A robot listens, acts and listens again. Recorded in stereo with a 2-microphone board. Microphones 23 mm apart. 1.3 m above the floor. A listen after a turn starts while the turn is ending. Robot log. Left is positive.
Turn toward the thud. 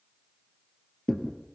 note: The thud: about 45° left or 135° left.
cmd yaw +45
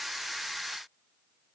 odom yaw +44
cmd idle
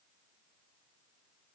end: I heard a thud, but can't make it out now. It was about straight ahead or 90° left.